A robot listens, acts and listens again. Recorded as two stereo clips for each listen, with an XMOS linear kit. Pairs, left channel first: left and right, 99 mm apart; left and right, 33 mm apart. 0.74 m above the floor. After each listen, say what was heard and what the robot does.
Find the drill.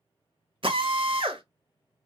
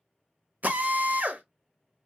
The drill: about 60° right or 120° right. Turn 60° right.
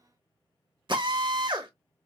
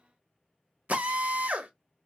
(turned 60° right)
So it is at 55° right. Turn 55° right.
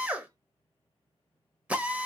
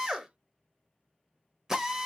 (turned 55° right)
The drill is now 15° right. Turn 15° right.
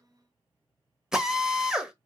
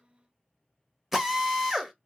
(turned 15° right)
Found it: a drill, straight ahead.